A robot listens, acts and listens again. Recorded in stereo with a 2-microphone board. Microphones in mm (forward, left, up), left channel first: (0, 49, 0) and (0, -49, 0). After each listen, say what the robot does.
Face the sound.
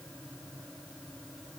Keep listening.
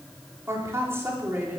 Turn 20° right.
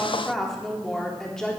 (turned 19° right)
Found it: a woman speaking, straight ahead, 2 to 4 m away.